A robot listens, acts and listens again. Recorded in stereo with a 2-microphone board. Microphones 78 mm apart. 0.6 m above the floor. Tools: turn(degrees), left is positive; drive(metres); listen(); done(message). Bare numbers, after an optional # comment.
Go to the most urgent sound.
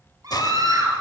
# The scream: about 60° right or 120° right.
turn(-60)
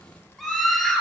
drive(1.0)
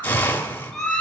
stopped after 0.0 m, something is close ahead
done("Something is in my way. I am facing the scream but have not reached it.")